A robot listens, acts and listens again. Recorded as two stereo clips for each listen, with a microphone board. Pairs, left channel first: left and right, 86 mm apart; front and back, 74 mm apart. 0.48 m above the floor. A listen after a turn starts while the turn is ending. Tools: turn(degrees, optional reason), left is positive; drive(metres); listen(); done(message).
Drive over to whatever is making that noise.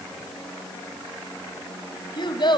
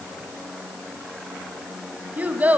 turn(degrees=110, reason="The child speaking: 110° left.")
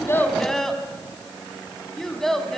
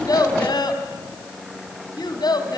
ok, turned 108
drive(metres=1.0)
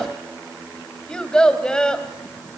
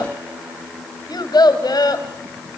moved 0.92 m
turn(degrees=10, reason="The child speaking is now 10° left.")
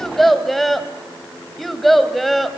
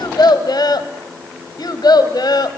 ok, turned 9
drive(metres=1.0)
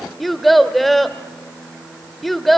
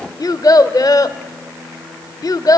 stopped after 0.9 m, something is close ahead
done("Arrived at the child speaking, straight ahead.")